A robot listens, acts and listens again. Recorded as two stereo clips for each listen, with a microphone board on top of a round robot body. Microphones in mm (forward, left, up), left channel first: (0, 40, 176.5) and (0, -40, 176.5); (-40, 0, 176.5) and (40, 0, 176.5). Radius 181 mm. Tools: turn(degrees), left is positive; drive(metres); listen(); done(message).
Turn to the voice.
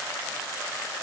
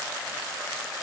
listen()
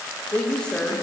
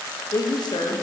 turn(degrees=170)
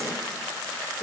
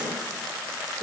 done("Found it: a woman speaking, straight ahead.")